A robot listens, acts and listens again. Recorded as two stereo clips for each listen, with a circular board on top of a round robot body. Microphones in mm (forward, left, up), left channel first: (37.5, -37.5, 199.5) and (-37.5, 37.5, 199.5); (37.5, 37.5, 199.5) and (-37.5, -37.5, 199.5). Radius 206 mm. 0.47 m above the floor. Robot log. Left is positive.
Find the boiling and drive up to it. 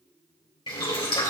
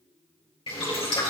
cmd fwd 1.0
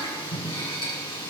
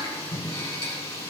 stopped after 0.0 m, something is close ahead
end: Something is in my way. I am facing the boiling but have not reached it.